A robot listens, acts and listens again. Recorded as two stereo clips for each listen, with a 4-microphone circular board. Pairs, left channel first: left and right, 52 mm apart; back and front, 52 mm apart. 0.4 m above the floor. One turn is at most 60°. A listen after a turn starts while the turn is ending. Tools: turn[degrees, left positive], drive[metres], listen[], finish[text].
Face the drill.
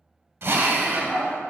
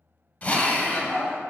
Thought: The drill: 125° right.
Action: turn[-60]
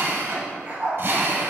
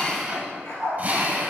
Thought: The drill is now 55° right.
Action: turn[-55]
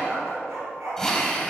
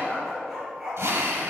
Thought: The drill is now 10° left.
Action: turn[10]
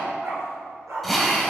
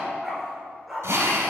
Action: finish[Facing the drill.]